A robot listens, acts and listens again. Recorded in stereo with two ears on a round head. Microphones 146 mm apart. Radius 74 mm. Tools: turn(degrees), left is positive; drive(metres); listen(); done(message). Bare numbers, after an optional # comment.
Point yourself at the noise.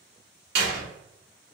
# The door slam: about 65° right or 115° right.
turn(-65)
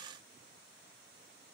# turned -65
listen()
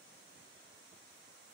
done("I heard a door slam, but can't make it out now. It was about straight ahead or 50° right.")